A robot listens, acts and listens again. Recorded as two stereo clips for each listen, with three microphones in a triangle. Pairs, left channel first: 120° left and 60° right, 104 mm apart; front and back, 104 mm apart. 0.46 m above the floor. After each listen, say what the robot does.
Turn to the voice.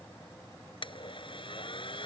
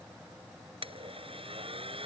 Keep listening.
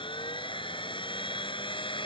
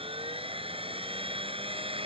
Keep listening.
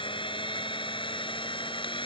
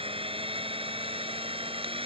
I can't make out anyone speaking to turn to.